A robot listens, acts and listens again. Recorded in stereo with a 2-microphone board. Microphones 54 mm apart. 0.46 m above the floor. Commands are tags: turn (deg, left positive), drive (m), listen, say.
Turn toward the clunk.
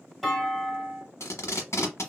<turn deg="30"/>
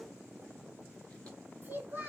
<listen/>
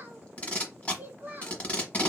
<say>I heard a clunk, but can't make it out now. It was about 25° right or 145° left.</say>